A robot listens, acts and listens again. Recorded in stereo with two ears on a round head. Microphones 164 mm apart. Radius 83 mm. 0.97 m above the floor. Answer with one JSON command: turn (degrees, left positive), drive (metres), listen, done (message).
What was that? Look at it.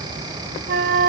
{"turn": -55}
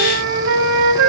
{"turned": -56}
{"turn": -70}
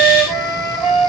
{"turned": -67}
{"done": "Facing the flute, 2 to 4 m away."}